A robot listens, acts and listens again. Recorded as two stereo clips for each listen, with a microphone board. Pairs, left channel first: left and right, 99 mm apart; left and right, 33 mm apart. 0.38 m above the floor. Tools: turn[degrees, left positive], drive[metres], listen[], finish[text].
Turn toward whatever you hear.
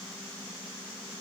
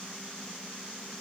Action: listen[]
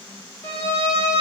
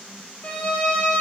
Thought: The violin: about 30° left or 150° left.
Action: turn[30]
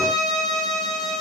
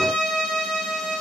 Action: finish[Facing the violin, 2 to 4 m away.]